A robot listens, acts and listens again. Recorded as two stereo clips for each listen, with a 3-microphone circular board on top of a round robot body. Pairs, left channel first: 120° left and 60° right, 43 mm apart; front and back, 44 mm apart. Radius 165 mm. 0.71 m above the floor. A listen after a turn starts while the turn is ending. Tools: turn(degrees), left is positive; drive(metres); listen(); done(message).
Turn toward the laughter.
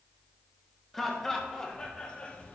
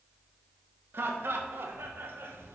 turn(degrees=175)
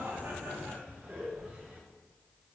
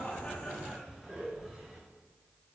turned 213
turn(degrees=-95)
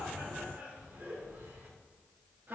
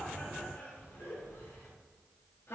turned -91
turn(degrees=-20)
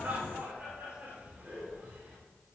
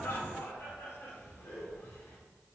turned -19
done("Facing the laughter.")